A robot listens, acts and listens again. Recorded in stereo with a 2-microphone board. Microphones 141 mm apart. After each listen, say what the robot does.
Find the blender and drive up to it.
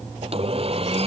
Turn 50° right.
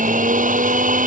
Turn 80° right.
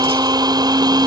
Turn 30° right.
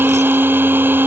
Turn 15° right.
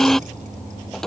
Drive 1.0 m forward.
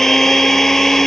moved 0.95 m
Drive 1.0 m forward.
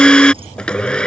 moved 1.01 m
Turn 10° left.
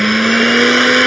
Drive 1.0 m forward.
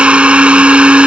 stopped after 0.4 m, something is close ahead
Turn 10° right.
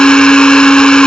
I am next to the blender.